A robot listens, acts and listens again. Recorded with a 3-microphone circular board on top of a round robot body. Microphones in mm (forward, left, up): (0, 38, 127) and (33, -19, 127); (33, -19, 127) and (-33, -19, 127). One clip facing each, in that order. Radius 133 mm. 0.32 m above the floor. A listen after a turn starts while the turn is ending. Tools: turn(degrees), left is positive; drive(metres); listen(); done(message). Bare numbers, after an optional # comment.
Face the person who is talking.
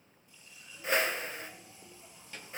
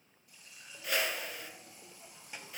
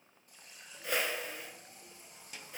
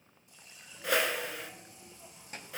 # The child speaking: 135° right.
turn(-135)
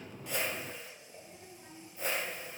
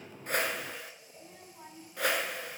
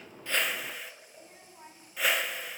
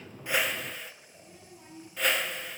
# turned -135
# The child speaking is now 45° right.
turn(-45)
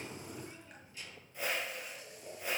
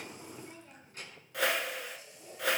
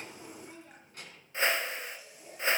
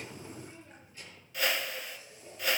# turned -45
# The child speaking is now 25° right.
turn(-25)
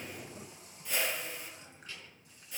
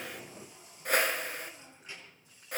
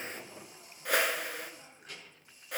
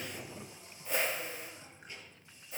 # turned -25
# The child speaking is now 10° left.
turn(10)
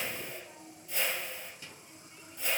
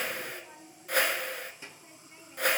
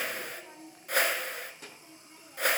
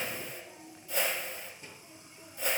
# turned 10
done("Found it: a child speaking, straight ahead, over 4 m away.")